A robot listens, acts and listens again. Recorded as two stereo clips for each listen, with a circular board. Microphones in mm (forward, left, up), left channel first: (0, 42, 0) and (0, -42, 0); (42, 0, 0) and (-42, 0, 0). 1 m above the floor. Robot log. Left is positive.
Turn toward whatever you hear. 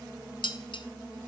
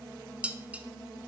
note: The dishes clattering: 105° left.
cmd yaw +105
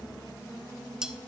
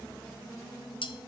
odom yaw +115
note: The dishes clattering is now 10° right.
cmd yaw -10
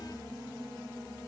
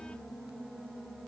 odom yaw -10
cmd idle
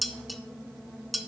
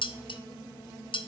end: Found it: dishes clattering, straight ahead, under 1 m away.